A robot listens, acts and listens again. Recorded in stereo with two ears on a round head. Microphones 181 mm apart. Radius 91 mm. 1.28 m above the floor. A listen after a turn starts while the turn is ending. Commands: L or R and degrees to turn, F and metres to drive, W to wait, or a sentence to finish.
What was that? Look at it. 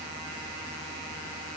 W
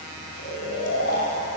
L60
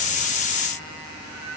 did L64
W
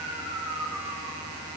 Facing the snoring, over 4 m away.